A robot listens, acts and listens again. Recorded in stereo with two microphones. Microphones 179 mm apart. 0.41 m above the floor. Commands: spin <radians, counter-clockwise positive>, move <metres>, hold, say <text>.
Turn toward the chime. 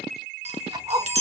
spin -0.61
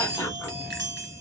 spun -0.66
spin -1.92
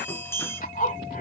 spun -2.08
spin 0.17
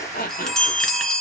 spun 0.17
say Found it: a chime, straight ahead, 1 to 2 m away.